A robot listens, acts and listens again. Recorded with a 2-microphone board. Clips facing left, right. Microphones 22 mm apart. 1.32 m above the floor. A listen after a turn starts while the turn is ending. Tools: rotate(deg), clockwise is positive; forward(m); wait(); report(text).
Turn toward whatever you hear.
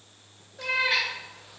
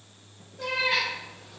rotate(-60)
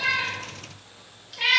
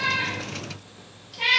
rotate(-60)
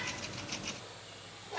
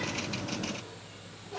rotate(-55)
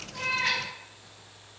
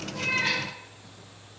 wait()
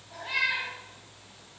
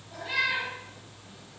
rotate(-10)
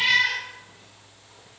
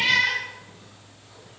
report("Found it: a cat meowing, straight ahead.")